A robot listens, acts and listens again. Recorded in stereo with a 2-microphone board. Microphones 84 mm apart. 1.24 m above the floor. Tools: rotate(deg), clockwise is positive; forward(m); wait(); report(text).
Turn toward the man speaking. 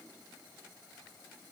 wait()
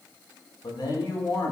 rotate(-70)
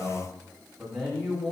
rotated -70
report("Facing the man speaking.")